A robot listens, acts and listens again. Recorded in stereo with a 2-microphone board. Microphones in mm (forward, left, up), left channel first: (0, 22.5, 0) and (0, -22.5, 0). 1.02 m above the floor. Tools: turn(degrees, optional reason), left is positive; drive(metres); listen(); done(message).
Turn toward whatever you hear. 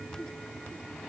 listen()
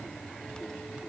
listen()
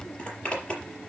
turn(degrees=20, reason="The zipper: about 20° left or 160° left.")
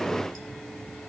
listen()
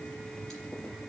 listen()
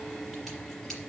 done("I heard a zipper, but can't make it out now. It was about straight ahead or 140° left.")